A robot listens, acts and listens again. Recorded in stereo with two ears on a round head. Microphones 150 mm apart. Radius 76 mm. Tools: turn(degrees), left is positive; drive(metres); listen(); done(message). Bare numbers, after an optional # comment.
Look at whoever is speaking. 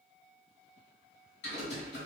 listen()
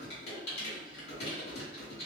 listen()
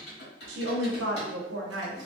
turn(-90)
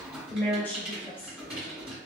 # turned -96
# So it is at 10° left.
turn(10)
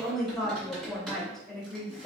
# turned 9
done("Found it: a woman speaking, straight ahead, under 1 m away.")